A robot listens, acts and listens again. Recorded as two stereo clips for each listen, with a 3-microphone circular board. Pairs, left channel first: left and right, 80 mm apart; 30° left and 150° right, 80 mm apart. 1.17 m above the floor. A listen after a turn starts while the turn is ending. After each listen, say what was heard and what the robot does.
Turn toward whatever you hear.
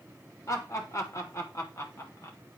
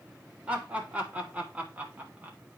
The laughter: 140° left. Turn 140° left.
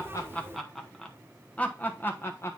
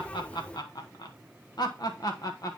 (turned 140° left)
The laughter is now 45° left. Turn 45° left.
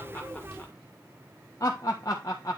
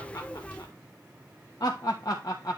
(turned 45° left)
The laughter is now 55° left. Turn 55° left.
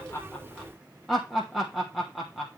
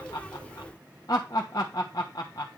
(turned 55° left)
Found it: laughter, straight ahead, 1 to 2 m away.